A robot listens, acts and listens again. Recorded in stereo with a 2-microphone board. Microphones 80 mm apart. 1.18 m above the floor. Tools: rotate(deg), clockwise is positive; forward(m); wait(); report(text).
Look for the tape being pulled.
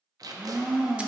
rotate(50)
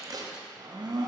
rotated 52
rotate(65)
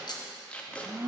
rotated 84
rotate(-20)
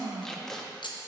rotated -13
report("Found it: tape being pulled, straight ahead, under 1 m away.")